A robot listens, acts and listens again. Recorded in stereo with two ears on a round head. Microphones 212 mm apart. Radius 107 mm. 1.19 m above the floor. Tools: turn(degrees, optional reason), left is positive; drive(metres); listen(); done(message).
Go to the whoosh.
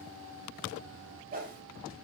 turn(degrees=-35, reason="The whoosh: about 35° right or 145° right.")
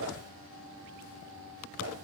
listen()
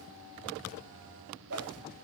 turn(degrees=-105, reason="So it is at 105° right.")
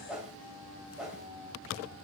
drive(metres=1.0)
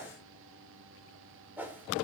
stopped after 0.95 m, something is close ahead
turn(degrees=-10, reason="The whoosh is now 10° right.")
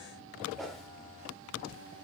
done("I am next to the whoosh.")